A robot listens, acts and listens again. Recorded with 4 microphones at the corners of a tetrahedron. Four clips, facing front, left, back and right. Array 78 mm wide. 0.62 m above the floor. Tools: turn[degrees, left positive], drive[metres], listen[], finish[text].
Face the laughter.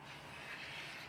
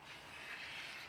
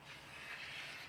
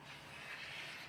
Action: listen[]
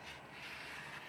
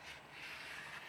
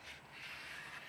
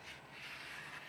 Action: listen[]
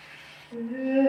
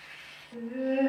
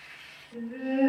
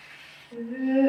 Thought: The laughter: 45° right.
Action: turn[-45]
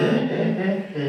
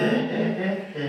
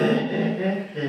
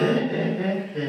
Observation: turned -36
Action: finish[Facing the laughter, 2 to 4 m away.]